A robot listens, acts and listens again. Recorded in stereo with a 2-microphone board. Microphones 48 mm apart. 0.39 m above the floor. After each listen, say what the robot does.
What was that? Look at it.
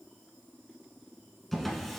Turn 30° left.
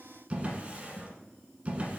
Turn 30° right.
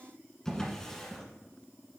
Turn 15° left.
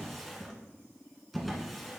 Found it: a drawer, straight ahead, 1 to 2 m away.